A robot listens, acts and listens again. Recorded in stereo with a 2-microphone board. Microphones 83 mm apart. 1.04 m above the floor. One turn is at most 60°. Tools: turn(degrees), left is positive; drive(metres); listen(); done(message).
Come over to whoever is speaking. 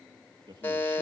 turn(degrees=-60)
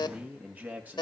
turn(degrees=-20)
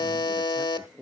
turn(degrees=-10)
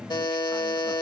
listen()
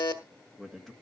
drive(metres=1.0)
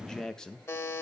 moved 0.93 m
turn(degrees=10)
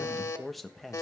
drive(metres=1.0)
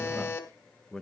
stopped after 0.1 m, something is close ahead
turn(degrees=10)
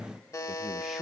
listen()
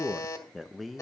done("I am next to the man speaking.")